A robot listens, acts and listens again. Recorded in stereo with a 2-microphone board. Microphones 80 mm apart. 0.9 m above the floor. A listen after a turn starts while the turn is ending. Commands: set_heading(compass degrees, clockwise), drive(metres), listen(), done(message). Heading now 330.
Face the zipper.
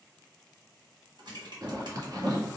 set_heading(20)
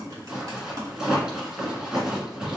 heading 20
set_heading(30)
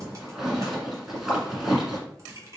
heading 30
done("Found it: a zipper, straight ahead.")